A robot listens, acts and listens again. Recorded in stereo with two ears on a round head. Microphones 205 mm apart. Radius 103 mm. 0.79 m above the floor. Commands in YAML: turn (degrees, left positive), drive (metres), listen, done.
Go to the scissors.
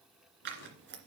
turn: -50
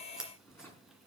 drive: 1.0
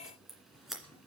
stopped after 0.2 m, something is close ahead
done: "Blocked. The scissors is further on, straight ahead."